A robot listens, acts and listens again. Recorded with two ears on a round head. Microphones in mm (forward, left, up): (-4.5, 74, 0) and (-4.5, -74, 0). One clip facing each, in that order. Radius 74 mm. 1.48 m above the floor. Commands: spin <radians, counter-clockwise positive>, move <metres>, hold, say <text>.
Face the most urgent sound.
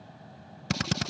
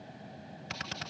hold
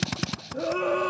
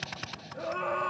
spin 0.87
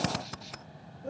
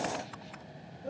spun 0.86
hold
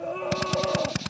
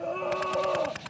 say Facing the scream.